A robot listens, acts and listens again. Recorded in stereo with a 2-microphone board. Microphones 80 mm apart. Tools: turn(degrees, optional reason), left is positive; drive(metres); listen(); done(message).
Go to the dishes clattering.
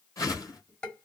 turn(degrees=30)
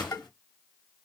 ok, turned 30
turn(degrees=140, reason="So it is at 140° left.")
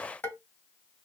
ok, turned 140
turn(degrees=30, reason="The dishes clattering is now 30° left.")
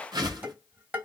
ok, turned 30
turn(degrees=-25, reason="The dishes clattering is now 25° right.")
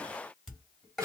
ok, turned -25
drive(metres=1.0)
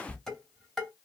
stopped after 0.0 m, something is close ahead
done("Something is in my way. I am facing the dishes clattering but have not reached it.")